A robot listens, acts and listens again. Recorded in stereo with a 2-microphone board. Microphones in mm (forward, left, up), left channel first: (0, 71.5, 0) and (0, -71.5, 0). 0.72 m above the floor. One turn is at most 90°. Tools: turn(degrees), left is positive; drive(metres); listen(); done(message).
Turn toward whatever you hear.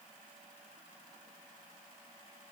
listen()
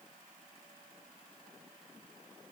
listen()
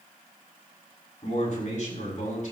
turn(degrees=60)
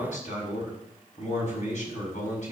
turn(degrees=55)
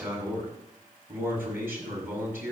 turn(degrees=-15)
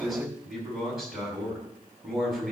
done("Found it: a man speaking, straight ahead, over 4 m away.")